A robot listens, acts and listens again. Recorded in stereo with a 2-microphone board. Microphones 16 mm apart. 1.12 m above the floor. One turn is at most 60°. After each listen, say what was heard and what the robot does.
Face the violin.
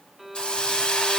The violin: about 20° right or 160° right. Turn 20° right.
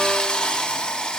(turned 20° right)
Keep listening.
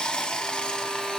Keep listening.
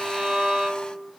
So it is at 140° right. Turn 60° right.
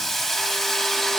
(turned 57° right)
Nothing new. It was at 85° right. Turn 60° right.
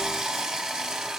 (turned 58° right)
Nothing new. It was at 25° right. Turn 25° right.
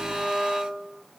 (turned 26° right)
Facing the violin, 2 to 4 m away.